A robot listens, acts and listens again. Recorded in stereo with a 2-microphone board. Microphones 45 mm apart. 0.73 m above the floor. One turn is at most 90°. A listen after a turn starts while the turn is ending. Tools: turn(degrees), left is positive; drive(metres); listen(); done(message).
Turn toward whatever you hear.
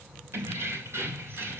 turn(degrees=-70)
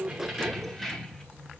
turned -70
turn(degrees=10)
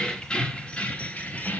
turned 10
turn(degrees=40)
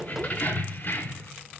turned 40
turn(degrees=50)
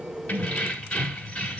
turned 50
turn(degrees=25)
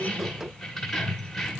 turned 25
done("Found it: keys jangling, straight ahead, 1 to 2 m away.")